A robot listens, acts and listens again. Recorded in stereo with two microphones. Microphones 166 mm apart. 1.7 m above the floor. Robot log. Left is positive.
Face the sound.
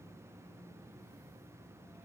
cmd idle
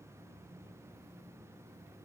cmd idle
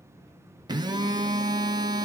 note: The phone buzzing: about 25° right or 155° right.
cmd yaw -25
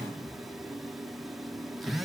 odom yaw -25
end: Found it: a phone buzzing, straight ahead.